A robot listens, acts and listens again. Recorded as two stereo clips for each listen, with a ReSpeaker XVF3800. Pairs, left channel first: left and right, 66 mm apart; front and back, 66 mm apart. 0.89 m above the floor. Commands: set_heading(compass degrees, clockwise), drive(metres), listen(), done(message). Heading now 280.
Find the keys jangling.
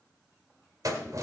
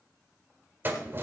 set_heading(45)
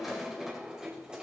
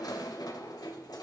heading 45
set_heading(60)
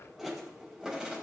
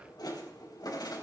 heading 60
set_heading(70)
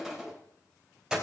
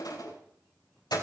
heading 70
set_heading(80)
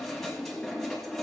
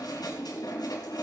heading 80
done("Facing the keys jangling.")